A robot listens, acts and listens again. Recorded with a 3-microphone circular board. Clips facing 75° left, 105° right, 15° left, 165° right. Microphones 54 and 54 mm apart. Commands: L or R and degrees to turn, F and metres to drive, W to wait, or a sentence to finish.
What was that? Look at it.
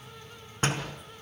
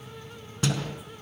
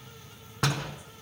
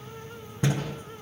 L25
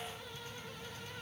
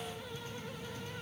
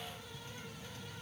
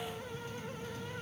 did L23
I heard a door slam from this way, but can't make it out now.